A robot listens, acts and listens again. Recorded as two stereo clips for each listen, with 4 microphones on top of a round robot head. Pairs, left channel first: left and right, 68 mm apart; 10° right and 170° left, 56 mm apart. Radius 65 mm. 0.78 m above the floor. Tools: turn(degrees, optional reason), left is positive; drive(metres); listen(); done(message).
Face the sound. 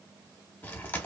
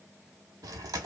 turn(degrees=155, reason="The chewing: 155° left.")
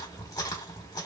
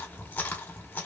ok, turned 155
turn(degrees=50, reason="The chewing is now 50° left.")
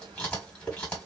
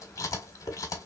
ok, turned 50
turn(degrees=15, reason="The chewing is now 15° left.")
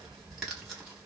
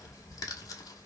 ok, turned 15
done("Facing the chewing, 1 to 2 m away.")